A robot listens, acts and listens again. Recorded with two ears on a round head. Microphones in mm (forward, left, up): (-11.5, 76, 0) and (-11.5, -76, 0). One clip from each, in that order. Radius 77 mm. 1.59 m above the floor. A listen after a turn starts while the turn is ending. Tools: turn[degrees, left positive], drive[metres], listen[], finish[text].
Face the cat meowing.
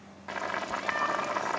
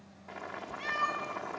Thought: The cat meowing: about 55° right or 125° right.
Action: turn[-55]
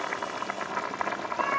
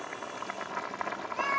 Thought: So it is at 65° right.
Action: turn[-65]
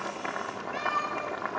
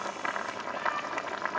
Thought: The cat meowing is now 20° left.
Action: turn[20]
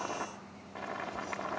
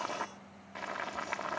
Action: listen[]
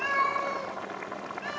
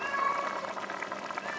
Action: finish[Found it: a cat meowing, straight ahead, over 4 m away.]